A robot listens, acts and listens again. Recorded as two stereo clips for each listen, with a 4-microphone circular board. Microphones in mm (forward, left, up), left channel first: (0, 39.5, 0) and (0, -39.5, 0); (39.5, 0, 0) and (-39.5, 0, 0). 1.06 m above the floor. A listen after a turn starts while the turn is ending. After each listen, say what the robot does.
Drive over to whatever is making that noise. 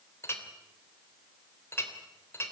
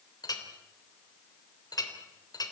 Turn 35° left.
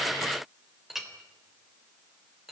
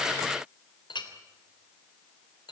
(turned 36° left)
Drive 1.0 m forward.
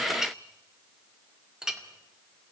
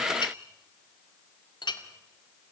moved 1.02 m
Drive 1.0 m forward.
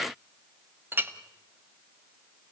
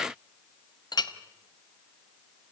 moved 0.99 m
Turn 25° right.
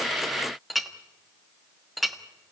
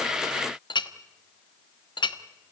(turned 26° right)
Drive 1.0 m forward.
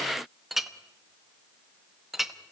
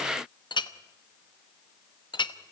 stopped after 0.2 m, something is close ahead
I am next to the clink.